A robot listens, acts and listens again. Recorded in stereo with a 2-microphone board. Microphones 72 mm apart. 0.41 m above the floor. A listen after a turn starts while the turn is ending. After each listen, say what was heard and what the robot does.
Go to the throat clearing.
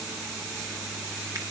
Keep listening.
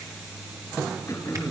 The throat clearing: about 45° left or 135° left. Turn 45° left.
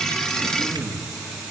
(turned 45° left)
Drive 1.0 m forward.
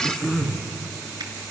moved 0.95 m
Drive 1.0 m forward.
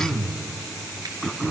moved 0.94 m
The throat clearing is now 10° left. Turn 10° left.
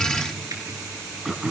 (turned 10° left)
Drive 1.0 m forward.
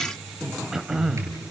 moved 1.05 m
Drive 1.0 m forward.
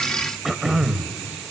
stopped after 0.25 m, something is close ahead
Arrived at the throat clearing, straight ahead.